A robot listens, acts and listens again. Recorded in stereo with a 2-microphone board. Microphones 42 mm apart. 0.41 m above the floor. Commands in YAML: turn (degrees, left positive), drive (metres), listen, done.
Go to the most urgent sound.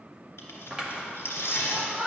turn: -35
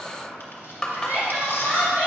turn: -105
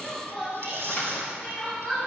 turn: 20
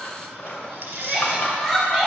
turn: 10
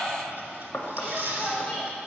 drive: 1.0
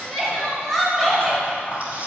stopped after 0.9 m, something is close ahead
done: "Arrived at the crying, straight ahead."